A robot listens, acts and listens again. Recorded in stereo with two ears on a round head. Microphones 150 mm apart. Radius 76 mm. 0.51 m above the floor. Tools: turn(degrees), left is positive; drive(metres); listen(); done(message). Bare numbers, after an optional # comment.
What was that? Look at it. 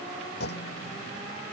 # The clunk: about 70° left or 110° left.
turn(70)
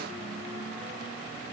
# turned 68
listen()
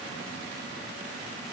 done("I heard a clunk, but can't make it out now. It was about 5° left or 40° left.")